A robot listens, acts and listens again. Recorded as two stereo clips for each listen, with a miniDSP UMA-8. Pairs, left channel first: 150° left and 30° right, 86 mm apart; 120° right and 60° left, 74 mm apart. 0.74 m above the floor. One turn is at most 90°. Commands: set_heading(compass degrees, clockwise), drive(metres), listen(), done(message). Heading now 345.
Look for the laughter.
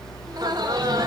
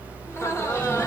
set_heading(50)
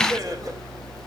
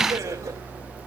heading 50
set_heading(35)
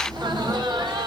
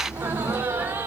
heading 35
done("Facing the laughter.")